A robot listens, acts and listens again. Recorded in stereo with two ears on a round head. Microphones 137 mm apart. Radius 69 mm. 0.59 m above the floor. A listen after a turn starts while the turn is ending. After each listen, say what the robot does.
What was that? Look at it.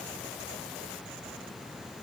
Keep listening.
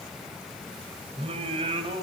Turn 35° right.
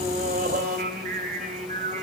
Turn 125° right.
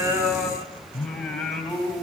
Found it: singing, straight ahead, 2 to 4 m away.